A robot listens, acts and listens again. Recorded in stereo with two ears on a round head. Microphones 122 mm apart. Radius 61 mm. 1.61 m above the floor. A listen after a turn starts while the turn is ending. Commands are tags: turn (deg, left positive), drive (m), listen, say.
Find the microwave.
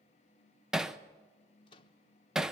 <turn deg="35"/>
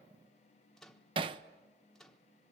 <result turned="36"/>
<say>Facing the microwave, 1 to 2 m away.</say>